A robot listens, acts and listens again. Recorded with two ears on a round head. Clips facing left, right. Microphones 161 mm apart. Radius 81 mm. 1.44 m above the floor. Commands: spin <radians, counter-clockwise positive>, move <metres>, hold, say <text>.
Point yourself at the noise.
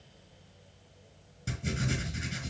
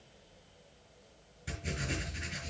spin 0.96
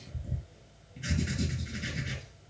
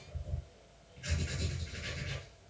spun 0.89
spin 1.22
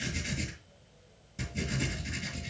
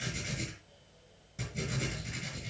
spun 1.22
say Facing the writing.